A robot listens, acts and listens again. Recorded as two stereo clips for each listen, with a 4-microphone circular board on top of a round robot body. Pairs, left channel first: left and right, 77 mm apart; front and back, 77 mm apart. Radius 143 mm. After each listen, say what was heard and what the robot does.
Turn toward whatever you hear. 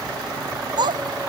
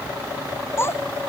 The child speaking: 60° right. Turn 60° right.
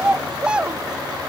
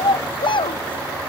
The child speaking is now 10° right. Turn 10° right.
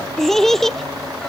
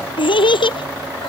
Found it: a child speaking, straight ahead.